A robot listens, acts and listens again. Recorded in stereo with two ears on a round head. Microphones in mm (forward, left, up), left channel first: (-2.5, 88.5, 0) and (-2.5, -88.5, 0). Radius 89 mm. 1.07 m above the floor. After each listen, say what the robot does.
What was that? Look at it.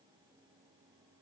Keep listening.
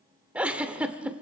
Turn 30° right.
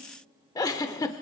Turn 20° left.
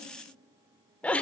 Turn 10° left.
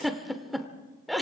Facing the giggle, 1 to 2 m away.